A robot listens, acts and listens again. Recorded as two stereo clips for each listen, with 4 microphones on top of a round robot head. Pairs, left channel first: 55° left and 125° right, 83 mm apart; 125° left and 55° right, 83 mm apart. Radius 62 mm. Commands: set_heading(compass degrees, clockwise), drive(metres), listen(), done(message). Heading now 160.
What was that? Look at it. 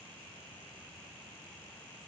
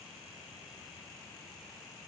listen()
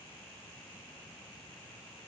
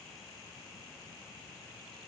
listen()
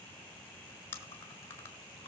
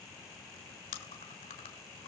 set_heading(45)
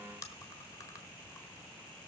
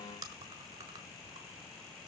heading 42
done("Found it: chewing, straight ahead, 2 to 4 m away.")